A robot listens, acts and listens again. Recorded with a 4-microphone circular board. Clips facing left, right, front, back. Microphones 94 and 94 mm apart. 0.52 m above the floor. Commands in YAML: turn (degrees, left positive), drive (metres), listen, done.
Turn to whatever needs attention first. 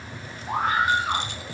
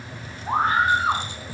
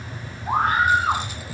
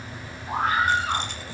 turn: -40
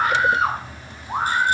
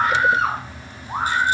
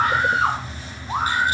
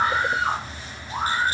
done: "Found it: a scream, straight ahead, over 4 m away."